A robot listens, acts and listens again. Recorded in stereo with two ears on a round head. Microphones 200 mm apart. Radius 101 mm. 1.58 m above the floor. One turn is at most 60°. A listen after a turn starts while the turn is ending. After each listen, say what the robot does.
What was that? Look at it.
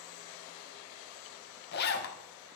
Turn 45° left.
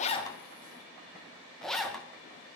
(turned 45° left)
Facing the zipper, 1 to 2 m away.